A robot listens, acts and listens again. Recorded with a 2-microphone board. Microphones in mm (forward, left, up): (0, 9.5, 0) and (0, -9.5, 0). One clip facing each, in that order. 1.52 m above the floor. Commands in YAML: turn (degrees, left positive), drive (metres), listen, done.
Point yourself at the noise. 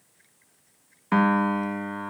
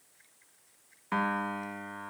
turn: 20
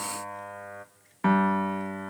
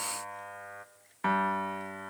done: "Facing the piano."